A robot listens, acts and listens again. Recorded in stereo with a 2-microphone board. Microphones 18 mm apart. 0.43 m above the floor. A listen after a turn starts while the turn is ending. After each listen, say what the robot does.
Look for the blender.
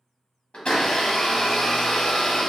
Turn 90° left.
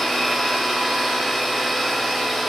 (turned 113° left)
Turn 15° right.
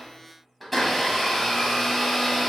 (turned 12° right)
Facing the blender.